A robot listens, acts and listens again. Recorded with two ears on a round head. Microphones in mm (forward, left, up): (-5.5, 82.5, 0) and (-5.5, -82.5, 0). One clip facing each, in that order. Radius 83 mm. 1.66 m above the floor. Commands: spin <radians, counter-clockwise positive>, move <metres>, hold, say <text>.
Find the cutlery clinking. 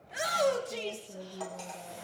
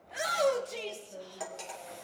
spin -0.44
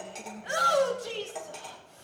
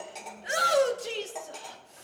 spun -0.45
say Found it: cutlery clinking, straight ahead, 2 to 4 m away.